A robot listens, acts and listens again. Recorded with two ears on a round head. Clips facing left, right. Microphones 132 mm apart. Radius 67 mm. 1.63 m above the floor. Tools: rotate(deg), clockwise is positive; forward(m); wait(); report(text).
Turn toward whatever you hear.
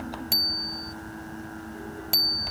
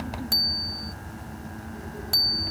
rotate(-20)
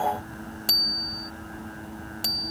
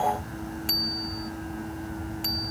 rotate(-140)
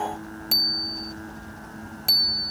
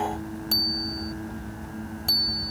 rotate(-15)
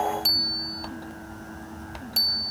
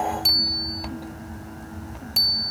report("Found it: a bicycle bell, straight ahead.")